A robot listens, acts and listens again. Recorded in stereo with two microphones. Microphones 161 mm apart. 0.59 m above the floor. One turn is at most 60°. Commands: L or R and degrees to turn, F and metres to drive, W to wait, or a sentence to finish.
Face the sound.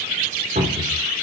R55
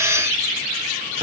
W
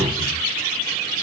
R50
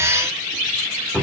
Facing the cupboard door, 2 to 4 m away.